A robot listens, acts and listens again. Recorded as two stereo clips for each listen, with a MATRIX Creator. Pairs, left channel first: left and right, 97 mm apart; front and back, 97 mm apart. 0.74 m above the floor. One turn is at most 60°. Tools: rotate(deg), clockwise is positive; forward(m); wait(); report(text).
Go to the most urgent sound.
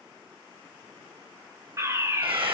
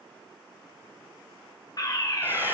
rotate(40)
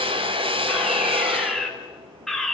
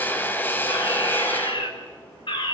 forward(1.0)
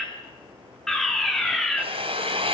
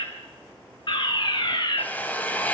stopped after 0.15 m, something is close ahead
report("Something is in my way. I am facing the fire alarm but have not reached it.")